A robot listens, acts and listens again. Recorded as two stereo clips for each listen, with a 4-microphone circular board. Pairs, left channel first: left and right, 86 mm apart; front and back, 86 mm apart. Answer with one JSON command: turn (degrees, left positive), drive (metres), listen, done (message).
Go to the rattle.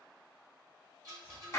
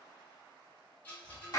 {"turn": -65}
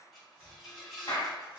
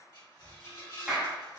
{"drive": 1.0}
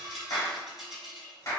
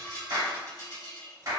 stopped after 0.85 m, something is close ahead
{"done": "Arrived at the rattle, straight ahead."}